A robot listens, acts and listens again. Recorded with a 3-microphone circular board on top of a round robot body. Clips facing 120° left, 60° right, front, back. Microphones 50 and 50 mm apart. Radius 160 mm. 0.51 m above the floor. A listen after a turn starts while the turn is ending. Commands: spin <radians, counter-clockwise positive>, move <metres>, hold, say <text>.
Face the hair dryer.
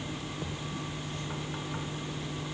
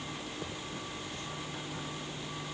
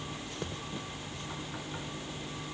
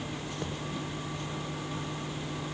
hold
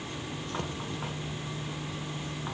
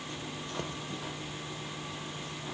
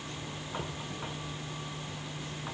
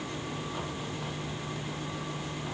hold
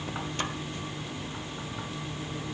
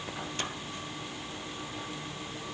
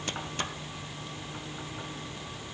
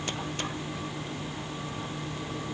say I can't make out a hair dryer to turn to.